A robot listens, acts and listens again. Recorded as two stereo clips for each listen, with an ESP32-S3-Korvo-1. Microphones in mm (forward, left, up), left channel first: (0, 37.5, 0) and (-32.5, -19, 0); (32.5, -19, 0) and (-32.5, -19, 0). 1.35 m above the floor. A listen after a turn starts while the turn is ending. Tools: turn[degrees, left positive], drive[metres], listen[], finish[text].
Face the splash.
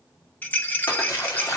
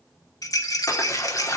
Thought: The splash: 35° left.
Action: turn[35]
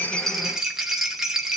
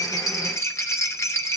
Action: finish[I heard a splash from this way, but can't make it out now.]